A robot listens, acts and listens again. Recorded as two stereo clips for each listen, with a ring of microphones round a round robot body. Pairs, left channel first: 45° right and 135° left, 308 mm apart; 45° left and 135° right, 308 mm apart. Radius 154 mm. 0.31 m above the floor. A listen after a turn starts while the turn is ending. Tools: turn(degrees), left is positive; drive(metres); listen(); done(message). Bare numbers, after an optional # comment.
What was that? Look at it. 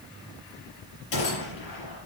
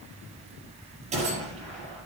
# The gunshot: 65° right.
turn(-65)
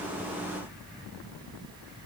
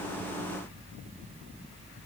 done("Facing where the gunshot came from. I can't hear it now.")